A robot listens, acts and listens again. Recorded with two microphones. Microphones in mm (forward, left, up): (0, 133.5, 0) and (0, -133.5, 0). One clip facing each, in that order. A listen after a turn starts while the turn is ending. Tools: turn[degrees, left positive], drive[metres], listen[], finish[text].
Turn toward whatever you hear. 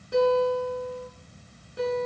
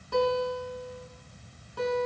Thought: The guitar: about 20° left or 160° left.
Action: turn[20]
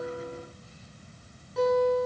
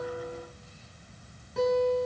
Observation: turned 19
Action: finish[Found it: a guitar, straight ahead.]